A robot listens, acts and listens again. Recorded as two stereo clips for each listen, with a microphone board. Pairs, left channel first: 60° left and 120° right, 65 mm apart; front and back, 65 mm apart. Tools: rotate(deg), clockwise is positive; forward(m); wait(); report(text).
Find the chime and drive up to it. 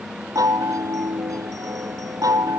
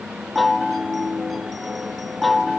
rotate(90)
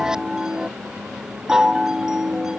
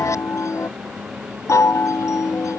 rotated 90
rotate(40)
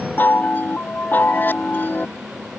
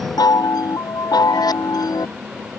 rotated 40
forward(1.0)
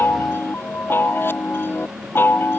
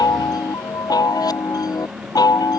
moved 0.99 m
forward(1.0)
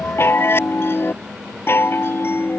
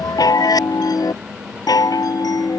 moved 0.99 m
forward(1.0)
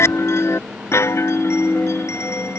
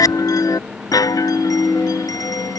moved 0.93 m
rotate(-15)
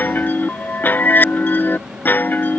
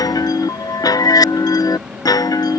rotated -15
forward(1.0)
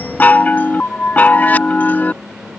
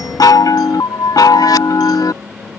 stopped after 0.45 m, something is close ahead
report("Arrived at the chime, straight ahead.")